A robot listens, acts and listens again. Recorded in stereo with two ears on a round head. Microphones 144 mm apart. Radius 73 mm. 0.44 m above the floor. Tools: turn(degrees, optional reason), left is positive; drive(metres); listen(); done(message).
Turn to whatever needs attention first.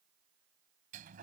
listen()
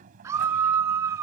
turn(degrees=-15, reason="The scream: about 15° right or 165° right.")
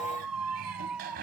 done("Facing the scream.")